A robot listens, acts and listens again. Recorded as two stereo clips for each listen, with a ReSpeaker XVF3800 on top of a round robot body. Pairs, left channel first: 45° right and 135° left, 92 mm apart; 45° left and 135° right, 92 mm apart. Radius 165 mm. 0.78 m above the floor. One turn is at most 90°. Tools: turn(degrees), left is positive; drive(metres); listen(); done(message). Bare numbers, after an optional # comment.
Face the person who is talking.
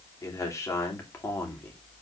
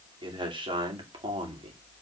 # The man speaking: 110° right.
turn(-90)
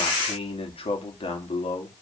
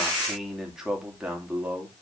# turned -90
# The man speaking is now 60° right.
turn(-60)
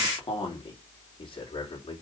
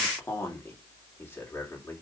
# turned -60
# The man speaking is now 15° right.
turn(-15)
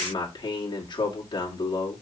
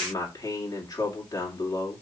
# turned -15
done("Found it: a man speaking, straight ahead, 2 to 4 m away.")